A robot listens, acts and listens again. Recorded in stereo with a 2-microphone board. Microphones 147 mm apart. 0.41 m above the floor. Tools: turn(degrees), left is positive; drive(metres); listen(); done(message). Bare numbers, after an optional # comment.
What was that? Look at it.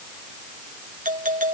# The doorbell: about 60° right or 120° right.
turn(-60)
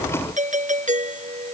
# So it is at 60° right.
turn(-60)
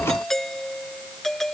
done("Facing the doorbell.")